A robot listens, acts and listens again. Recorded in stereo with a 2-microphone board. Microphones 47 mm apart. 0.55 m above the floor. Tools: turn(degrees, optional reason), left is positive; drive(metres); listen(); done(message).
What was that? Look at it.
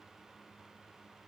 listen()
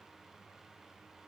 listen()
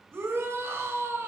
turn(degrees=-65, reason="The shout: about 65° right or 115° right.")
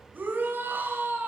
turn(degrees=-45, reason="So it is at 45° right.")
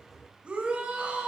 turn(degrees=-20, reason="The shout is now 20° right.")
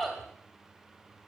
done("Found it: a shout, straight ahead.")